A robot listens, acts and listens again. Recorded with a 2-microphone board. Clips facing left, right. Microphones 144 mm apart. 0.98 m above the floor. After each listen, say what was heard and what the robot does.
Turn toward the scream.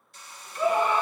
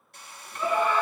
The scream: about 25° left or 155° left. Turn 25° left.
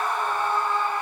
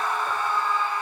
So it is at 130° left. Turn 130° left.
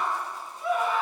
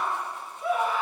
Found it: a scream, straight ahead.